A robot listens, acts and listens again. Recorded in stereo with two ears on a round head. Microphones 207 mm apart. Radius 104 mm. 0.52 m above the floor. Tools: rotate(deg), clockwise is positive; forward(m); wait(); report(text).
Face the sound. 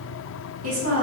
rotate(60)
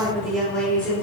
rotate(-10)
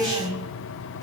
report("Found it: a woman speaking, straight ahead, 1 to 2 m away.")